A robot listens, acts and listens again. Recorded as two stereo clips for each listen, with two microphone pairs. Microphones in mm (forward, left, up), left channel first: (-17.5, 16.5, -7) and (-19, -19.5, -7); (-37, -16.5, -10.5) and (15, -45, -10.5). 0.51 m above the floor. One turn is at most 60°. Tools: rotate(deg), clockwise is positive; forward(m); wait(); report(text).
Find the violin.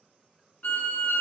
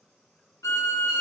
rotate(-60)
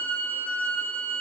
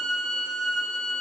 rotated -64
rotate(-60)
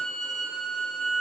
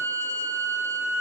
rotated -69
rotate(10)
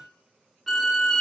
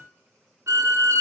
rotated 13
report("Found it: a violin, straight ahead, 1 to 2 m away.")